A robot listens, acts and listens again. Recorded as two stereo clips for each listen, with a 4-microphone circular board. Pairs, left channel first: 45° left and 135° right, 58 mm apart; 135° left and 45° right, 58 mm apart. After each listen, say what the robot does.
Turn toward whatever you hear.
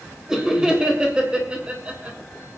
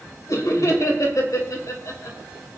Turn 160° left.
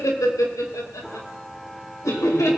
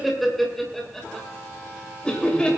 Turn 65° left.
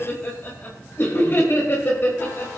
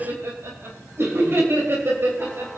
Found it: laughter, straight ahead, 2 to 4 m away.